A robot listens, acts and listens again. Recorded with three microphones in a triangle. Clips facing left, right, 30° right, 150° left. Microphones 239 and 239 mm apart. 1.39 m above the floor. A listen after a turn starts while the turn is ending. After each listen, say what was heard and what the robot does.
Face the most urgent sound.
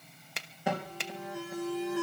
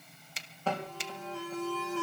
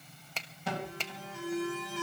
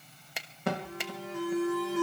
The alarm: 165° left. Turn 165° left.
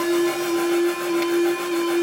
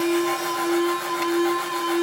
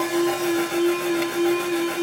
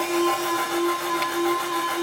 The alarm is now 30° left. Turn 30° left.
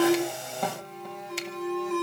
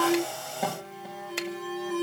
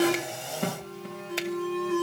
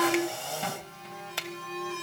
Found it: an alarm, straight ahead, over 4 m away.